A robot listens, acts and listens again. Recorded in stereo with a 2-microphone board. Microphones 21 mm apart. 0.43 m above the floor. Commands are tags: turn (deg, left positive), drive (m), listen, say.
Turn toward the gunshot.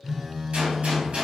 <turn deg="-70"/>
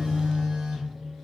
<listen/>
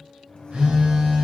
<say>I heard a gunshot, but can't make it out now. It was about straight ahead or 40° right.</say>